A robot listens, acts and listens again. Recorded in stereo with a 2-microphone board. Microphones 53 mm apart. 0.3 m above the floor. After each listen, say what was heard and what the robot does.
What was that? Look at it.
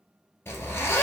The zipper: about 50° left or 130° left. Turn 50° left.
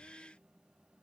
Keep listening.
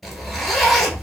Found it: a zipper, straight ahead, 1 to 2 m away.